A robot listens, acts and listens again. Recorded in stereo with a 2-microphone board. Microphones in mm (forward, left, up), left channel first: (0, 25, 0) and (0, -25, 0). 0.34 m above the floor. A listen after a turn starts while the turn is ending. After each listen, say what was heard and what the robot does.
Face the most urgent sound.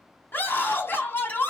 The scream: about 45° left or 135° left. Turn 45° left.
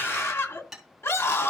So it is at 85° left. Turn 85° left.
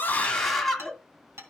Facing the scream.